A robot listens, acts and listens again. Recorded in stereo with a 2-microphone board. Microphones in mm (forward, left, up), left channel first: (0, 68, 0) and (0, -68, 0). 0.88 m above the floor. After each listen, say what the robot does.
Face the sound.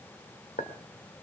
Turn 90° left.
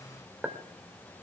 Turn 15° right.
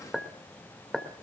Found it: a clink, straight ahead.